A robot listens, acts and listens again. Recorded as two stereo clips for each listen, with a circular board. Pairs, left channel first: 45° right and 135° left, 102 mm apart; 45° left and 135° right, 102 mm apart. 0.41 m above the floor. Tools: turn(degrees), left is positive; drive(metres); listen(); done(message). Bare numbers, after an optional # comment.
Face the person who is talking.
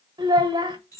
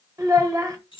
# The child speaking: 175° left.
turn(175)
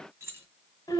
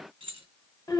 done("Facing the child speaking, 1 to 2 m away.")